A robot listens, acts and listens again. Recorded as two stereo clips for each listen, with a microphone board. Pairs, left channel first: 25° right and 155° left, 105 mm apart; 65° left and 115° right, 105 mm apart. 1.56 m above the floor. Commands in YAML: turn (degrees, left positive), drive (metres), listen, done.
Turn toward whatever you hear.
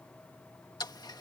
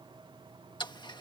turn: 25
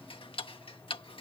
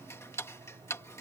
done: "Found it: ticking, straight ahead."